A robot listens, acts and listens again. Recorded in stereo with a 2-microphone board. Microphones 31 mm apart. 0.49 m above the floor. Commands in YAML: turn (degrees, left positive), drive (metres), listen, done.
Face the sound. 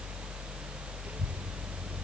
turn: -50
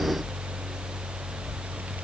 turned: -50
turn: -80
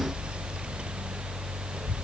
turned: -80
turn: -35
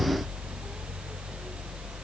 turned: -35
listen: true
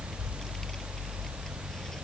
turn: 15
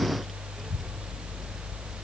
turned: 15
done: "Facing the child speaking."